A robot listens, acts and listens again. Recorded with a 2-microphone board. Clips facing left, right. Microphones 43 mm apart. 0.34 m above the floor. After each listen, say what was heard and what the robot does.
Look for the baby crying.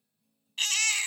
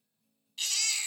The baby crying: about 55° left or 125° left. Turn 55° left.
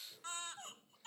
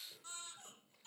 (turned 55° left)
So it is at 70° left. Turn 70° left.
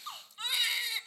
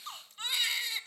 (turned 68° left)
Facing the baby crying.